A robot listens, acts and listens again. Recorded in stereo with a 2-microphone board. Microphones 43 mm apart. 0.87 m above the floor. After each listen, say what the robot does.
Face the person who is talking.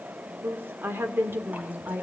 Turn 60° right.
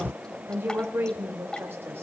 Turn 65° right.
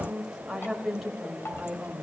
Facing the woman speaking, over 4 m away.